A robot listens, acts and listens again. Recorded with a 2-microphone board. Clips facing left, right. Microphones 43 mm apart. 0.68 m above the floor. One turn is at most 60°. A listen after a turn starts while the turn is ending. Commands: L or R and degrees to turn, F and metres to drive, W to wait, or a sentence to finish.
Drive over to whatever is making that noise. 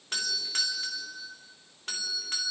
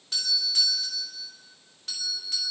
L45
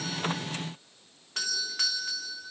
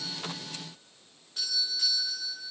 L60
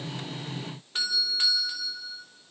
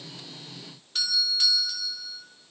L30
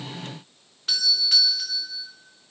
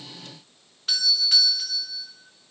F1.0
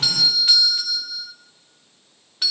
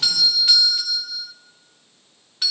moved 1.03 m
F1.0
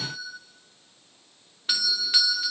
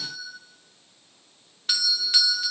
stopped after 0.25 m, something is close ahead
L10
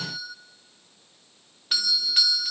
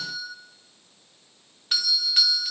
Arrived at the doorbell, straight ahead.